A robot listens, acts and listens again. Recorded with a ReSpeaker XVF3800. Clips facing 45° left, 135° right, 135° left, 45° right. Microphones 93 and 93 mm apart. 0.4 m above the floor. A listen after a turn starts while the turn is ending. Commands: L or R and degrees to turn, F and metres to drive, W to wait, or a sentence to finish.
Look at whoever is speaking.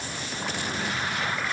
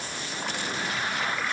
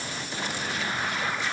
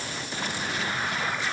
W
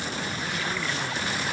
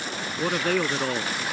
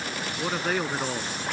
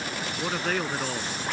R145
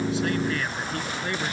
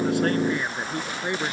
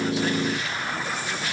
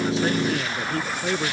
R70
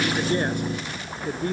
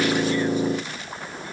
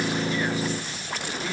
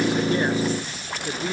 L15
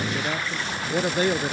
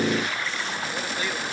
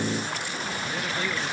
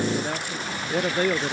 Facing the man speaking.